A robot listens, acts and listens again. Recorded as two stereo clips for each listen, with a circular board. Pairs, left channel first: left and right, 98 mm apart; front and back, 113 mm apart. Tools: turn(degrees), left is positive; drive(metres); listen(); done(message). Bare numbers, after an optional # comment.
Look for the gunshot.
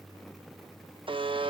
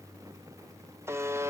listen()
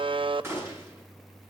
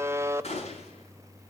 # The gunshot: 25° right.
turn(-25)
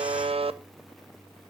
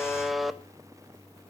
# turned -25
done("Facing where the gunshot came from. I can't hear it now.")